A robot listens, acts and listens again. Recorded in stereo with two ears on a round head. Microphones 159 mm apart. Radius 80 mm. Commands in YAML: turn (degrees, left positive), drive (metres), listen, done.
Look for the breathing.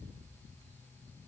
listen: true
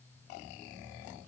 listen: true
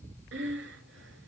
turn: -65
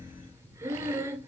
turn: -15
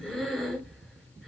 done: "Found it: breathing, straight ahead, 2 to 4 m away."